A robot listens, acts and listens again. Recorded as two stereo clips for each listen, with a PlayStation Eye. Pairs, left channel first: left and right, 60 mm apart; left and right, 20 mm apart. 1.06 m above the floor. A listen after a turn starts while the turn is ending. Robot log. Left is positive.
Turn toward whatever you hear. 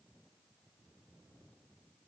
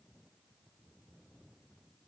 cmd idle
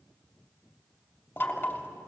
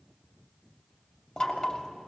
note: The knocking: about 35° left or 145° left.
cmd yaw +35
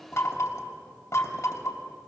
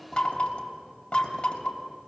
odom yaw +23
note: So it is at 125° left.
cmd yaw +125
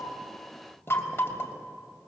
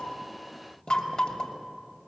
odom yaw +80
note: The knocking is now 45° left.
cmd yaw +45
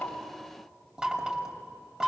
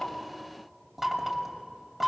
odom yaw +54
note: The knocking is now 10° right.
cmd yaw -10
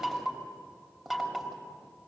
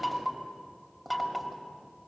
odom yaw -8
end: Facing the knocking, 2 to 4 m away.